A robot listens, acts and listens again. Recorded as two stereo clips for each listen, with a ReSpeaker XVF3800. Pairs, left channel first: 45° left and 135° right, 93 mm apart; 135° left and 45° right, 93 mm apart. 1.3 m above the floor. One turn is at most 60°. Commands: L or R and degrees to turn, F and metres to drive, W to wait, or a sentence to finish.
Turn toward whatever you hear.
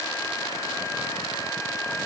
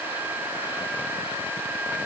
W
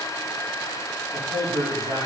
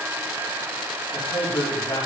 R60
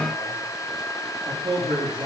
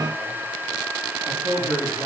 R60
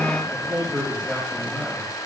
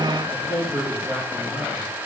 R30
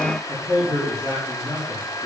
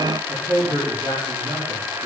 Found it: a man speaking, straight ahead, 2 to 4 m away.